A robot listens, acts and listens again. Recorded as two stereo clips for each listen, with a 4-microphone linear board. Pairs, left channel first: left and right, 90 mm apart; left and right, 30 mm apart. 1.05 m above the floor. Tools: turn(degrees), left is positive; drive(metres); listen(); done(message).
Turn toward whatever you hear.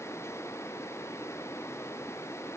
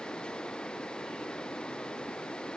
listen()
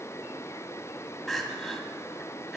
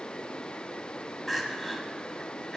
turn(degrees=30)
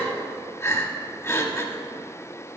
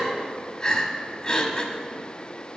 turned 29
turn(degrees=150)
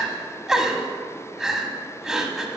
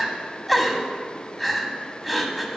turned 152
done("Found it: crying, straight ahead, under 1 m away.")